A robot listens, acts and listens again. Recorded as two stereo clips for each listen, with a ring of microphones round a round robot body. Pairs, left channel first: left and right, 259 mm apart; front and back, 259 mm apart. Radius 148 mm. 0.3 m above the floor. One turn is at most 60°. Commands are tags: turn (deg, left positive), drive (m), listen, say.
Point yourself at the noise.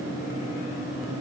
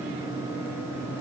<listen/>
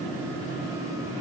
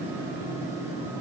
<listen/>
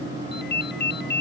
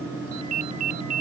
<turn deg="60"/>
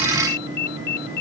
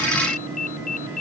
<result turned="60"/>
<turn deg="60"/>
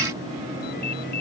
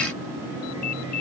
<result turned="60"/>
<turn deg="30"/>
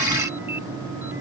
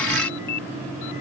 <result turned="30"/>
<listen/>
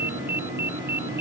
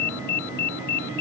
<say>Found it: a ringtone, straight ahead.</say>